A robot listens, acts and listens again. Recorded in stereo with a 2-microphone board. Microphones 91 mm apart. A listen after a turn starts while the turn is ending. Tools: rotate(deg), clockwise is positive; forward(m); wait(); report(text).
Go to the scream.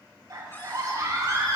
rotate(45)
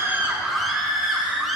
forward(1.0)
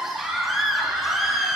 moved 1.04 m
forward(1.0)
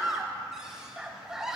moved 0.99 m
forward(1.0)
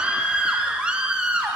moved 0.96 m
rotate(15)
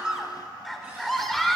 forward(1.0)
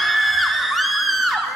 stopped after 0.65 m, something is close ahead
report("Arrived at the scream, straight ahead.")